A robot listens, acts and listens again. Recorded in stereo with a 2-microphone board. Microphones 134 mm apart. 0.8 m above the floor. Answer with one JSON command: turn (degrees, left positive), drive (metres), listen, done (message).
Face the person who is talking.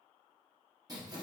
{"listen": true}
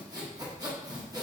{"listen": true}
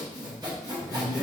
{"turn": 15}
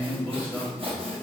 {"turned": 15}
{"done": "Facing the man speaking, 1 to 2 m away."}